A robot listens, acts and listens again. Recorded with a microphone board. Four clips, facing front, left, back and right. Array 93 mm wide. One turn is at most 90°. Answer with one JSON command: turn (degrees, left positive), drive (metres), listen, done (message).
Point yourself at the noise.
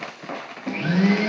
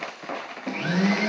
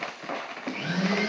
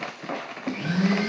{"turn": 25}
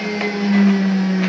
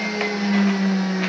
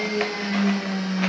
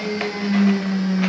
{"turn": 15}
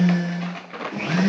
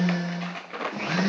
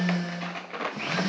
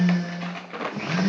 {"done": "Found it: a blender, straight ahead, 2 to 4 m away."}